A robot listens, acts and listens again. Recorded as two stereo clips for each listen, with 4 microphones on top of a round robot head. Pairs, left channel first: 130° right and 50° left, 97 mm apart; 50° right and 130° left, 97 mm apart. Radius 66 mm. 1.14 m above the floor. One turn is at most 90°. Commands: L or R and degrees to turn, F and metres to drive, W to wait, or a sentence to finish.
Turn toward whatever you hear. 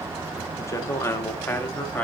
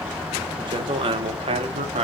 L90
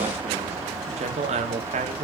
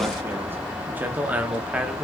L45
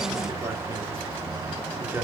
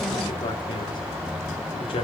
R15
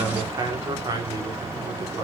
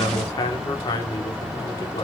Facing the man speaking, 2 to 4 m away.